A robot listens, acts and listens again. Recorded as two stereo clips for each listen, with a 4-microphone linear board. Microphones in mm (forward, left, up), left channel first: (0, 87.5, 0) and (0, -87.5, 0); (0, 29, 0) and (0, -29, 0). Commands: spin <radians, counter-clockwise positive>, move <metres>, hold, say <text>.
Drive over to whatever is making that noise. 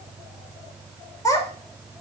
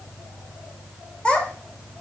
spin 0.35
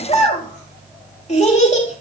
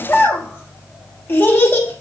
spin 2.44
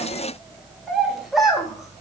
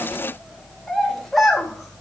move 1.0
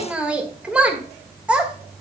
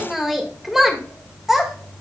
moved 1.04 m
move 1.0
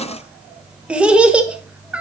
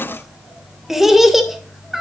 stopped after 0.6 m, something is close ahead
say Arrived at the child speaking, straight ahead.